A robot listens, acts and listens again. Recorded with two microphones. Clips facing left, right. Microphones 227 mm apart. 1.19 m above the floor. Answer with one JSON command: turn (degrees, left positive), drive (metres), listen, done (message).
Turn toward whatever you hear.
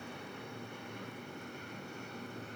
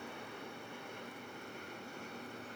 {"listen": true}
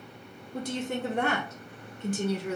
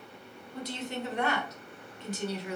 {"turn": 50}
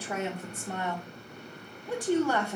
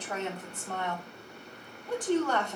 {"turn": 10}
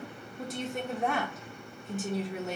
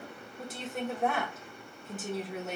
{"done": "Facing the woman speaking."}